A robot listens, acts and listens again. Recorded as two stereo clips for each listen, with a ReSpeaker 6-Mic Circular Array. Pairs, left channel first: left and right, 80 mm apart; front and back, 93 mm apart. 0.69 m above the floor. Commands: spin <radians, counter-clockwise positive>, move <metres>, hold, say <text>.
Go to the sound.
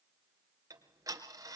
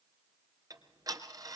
spin -2.36
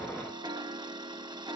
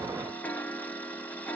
spin -1.31
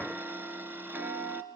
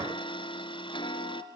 spin -0.44
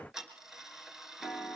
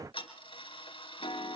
move 1.0
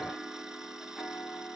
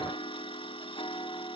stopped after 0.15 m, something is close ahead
say Something is in my way. I am facing the ticking but have not reached it.